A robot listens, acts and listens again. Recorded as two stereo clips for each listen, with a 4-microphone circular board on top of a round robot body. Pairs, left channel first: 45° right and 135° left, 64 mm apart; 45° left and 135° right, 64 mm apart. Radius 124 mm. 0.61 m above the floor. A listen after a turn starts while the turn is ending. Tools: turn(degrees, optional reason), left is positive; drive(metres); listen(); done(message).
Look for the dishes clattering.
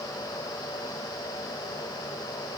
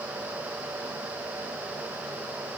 listen()
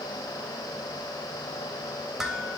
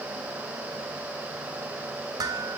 turn(degrees=-140, reason="The dishes clattering: 140° right.")
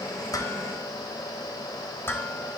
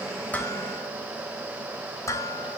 turn(degrees=10, reason="The dishes clattering is now 10° left.")
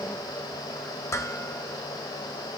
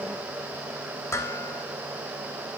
done("Facing the dishes clattering, 2 to 4 m away.")